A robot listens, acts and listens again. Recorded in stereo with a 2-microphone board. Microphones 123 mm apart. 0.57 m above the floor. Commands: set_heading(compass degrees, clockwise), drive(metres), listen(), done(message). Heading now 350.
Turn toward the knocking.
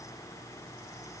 listen()
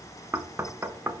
set_heading(10)
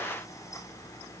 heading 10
listen()
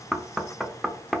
done("Found it: knocking, straight ahead.")